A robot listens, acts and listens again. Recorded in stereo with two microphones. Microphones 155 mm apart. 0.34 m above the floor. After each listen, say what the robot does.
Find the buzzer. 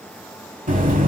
Turn 60° right.
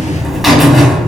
Found it: a buzzer, straight ahead, under 1 m away.